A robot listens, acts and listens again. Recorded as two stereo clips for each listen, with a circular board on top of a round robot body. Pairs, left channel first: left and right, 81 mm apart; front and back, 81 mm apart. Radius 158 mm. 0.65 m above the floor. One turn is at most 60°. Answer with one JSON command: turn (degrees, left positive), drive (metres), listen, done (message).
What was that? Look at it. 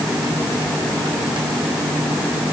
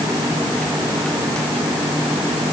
{"listen": true}
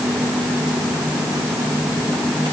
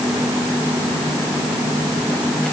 {"listen": true}
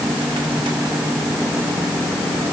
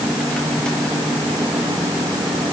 {"done": "I can't make out anything to turn to."}